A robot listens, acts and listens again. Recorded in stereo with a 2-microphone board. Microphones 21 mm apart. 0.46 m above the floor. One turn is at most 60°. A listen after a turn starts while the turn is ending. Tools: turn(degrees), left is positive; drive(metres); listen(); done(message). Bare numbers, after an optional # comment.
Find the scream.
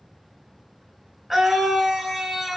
turn(-30)
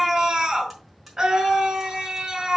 # So it is at 145° right.
turn(-60)
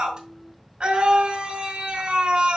# The scream is now 75° right.
turn(-60)
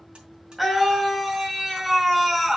# The scream is now 10° right.
turn(-10)
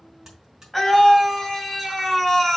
done("Found it: a scream, straight ahead, 2 to 4 m away.")